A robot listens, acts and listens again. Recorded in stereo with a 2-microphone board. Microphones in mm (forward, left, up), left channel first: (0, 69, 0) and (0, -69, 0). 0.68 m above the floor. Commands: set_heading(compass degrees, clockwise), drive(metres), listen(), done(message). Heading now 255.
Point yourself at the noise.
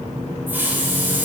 set_heading(285)
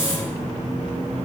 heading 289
listen()
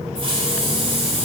set_heading(64)
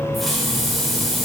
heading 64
done("Found it: a hiss, straight ahead, 2 to 4 m away.")